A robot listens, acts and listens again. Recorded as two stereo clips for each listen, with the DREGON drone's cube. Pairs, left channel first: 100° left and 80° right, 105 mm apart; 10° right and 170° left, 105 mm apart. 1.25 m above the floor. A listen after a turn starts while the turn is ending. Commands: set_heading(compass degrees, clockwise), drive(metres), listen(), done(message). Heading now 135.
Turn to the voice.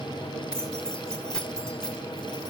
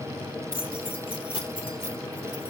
listen()
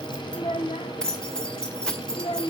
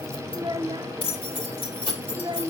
set_heading(10)
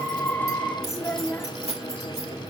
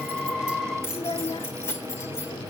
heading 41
set_heading(11)
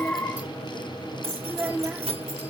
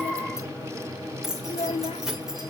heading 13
done("Facing the child speaking, 1 to 2 m away.")